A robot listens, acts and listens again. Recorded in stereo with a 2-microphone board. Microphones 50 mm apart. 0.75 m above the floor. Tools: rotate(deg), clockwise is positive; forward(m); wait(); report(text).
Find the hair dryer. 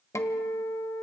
wait()
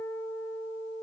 wait()
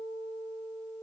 report("I can't make out a hair dryer to turn to.")